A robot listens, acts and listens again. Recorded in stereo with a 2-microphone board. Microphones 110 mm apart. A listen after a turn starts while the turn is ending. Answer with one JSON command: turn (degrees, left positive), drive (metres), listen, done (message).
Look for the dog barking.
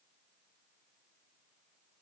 {"listen": true}
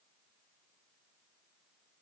{"listen": true}
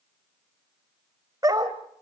{"turn": -35}
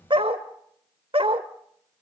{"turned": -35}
{"turn": -125}
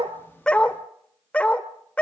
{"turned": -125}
{"turn": 10}
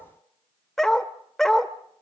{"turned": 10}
{"done": "Found it: a dog barking, straight ahead."}